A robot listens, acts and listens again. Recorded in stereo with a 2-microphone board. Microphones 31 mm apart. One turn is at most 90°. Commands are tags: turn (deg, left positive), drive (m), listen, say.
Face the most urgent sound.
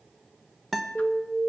<turn deg="30"/>
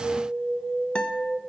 <turn deg="-30"/>
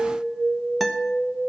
<say>Facing the alarm.</say>